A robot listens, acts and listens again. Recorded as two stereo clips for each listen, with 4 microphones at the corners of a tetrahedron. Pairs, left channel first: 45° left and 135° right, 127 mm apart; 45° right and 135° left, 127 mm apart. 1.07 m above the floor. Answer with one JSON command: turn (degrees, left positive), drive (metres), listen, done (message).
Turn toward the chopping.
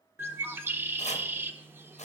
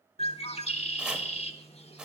{"turn": 55}
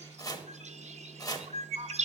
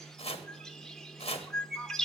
{"turn": -10}
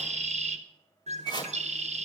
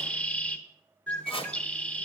{"done": "Facing the chopping, under 1 m away."}